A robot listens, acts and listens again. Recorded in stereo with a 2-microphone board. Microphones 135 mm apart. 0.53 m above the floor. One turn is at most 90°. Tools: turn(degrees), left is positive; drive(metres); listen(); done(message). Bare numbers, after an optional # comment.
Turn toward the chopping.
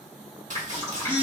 # The chopping: about 70° right or 110° right.
turn(-70)
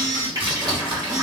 # So it is at 40° right.
turn(-40)
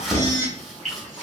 done("Facing the chopping.")